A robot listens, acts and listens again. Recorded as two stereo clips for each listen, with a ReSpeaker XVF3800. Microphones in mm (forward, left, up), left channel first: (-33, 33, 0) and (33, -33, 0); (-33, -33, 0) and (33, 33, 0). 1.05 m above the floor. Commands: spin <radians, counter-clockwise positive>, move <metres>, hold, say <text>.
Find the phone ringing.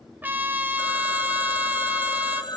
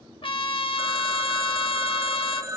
spin 1.75
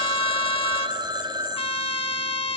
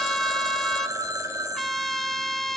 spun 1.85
spin -0.17
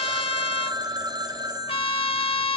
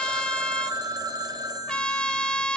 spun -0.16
say Found it: a phone ringing, straight ahead.